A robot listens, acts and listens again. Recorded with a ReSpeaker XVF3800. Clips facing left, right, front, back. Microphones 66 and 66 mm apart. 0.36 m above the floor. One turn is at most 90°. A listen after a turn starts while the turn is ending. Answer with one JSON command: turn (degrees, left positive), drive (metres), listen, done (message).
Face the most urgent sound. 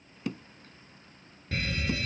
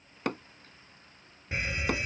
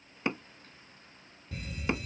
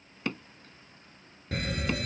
{"turn": -90}
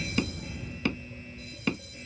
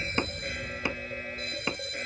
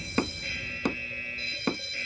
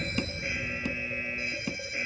{"turn": -90}
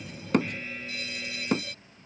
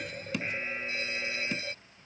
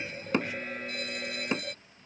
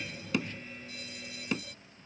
{"turn": -30}
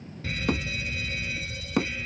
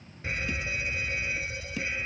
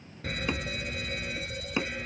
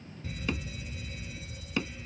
{"turn": -25}
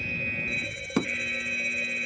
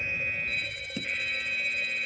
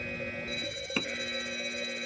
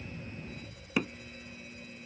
{"done": "Found it: a fire alarm, straight ahead."}